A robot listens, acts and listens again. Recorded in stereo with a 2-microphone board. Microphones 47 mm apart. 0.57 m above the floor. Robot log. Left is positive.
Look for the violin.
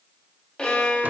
note: The violin: about 25° left or 155° left.
cmd yaw +25
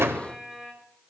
cmd idle
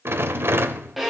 end: Facing the violin, 2 to 4 m away.